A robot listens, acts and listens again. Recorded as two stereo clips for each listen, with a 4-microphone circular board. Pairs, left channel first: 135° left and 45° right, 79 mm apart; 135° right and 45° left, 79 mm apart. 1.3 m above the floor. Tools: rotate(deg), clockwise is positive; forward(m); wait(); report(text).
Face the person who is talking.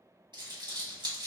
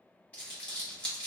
wait()
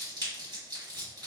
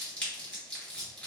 wait()
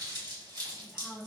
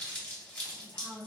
rotate(130)
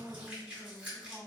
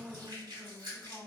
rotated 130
rotate(40)
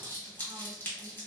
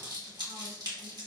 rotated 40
wait()
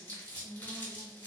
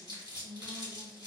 report("Found it: a woman speaking, straight ahead.")